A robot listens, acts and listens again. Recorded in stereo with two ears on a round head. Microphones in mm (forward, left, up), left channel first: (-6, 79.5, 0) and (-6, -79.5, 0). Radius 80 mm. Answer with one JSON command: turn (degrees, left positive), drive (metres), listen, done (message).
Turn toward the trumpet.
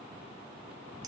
{"listen": true}
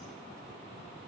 {"listen": true}
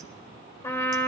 {"turn": 15}
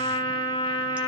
{"turn": 150}
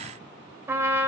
{"turn": -15}
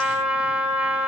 {"turn": -10}
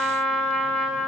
{"done": "Found it: a trumpet, straight ahead."}